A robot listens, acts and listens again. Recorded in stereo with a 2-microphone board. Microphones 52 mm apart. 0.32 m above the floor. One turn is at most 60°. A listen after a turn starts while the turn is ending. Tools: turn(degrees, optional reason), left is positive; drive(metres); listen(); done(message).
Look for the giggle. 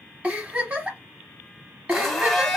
turn(degrees=-30, reason="The giggle: about 30° right or 150° right.")
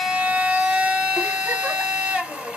listen()
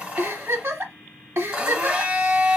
turn(degrees=-60, reason="So it is at 115° right.")
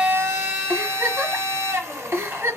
turn(degrees=-55, reason="The giggle is now 55° right.")
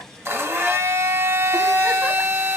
listen()
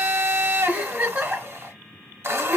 turn(degrees=-30, reason="The giggle is now 30° right.")
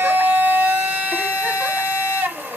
listen()
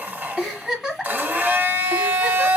done("Found it: a giggle, straight ahead.")